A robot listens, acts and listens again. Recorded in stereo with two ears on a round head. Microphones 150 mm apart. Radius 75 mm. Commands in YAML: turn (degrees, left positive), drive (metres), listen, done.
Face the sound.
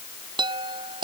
turn: -30
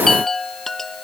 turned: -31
done: "Facing the chime."